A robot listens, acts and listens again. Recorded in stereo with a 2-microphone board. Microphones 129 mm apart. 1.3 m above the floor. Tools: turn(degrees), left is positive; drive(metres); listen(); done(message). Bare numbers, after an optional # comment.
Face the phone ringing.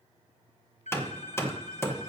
# The phone ringing: about 70° left or 110° left.
turn(70)
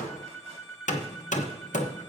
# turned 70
done("Found it: a phone ringing, straight ahead, 1 to 2 m away.")